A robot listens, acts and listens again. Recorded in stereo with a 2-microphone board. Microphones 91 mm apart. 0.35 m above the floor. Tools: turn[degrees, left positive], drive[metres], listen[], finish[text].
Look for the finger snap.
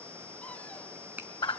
Thought: The finger snap: about 20° right or 160° right.
Action: turn[-20]
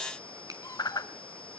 Action: listen[]
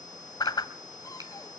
Action: listen[]
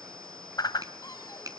Thought: So it is at 135° right.
Action: turn[-135]
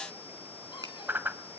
Action: listen[]
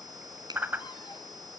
Thought: The finger snap is now 50° right.
Action: turn[-50]
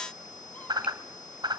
Action: listen[]
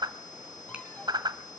Action: listen[]
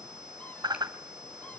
Action: finish[Facing where the finger snap came from. I can't hear it now.]